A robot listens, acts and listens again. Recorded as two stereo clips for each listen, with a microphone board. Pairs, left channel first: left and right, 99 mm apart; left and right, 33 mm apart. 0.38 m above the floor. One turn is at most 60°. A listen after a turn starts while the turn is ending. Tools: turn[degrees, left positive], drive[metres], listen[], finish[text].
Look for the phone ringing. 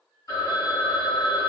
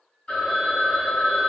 Thought: The phone ringing: about 35° left or 145° left.
Action: turn[35]
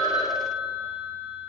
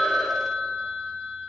Action: finish[Facing the phone ringing.]